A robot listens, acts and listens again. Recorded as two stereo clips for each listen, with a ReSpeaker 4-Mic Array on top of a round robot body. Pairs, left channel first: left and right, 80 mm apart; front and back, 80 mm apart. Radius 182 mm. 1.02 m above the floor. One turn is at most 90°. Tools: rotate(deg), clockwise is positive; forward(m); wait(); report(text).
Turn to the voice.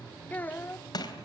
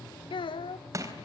rotate(-20)
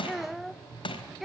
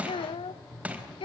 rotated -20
report("Found it: a child speaking, straight ahead, under 1 m away.")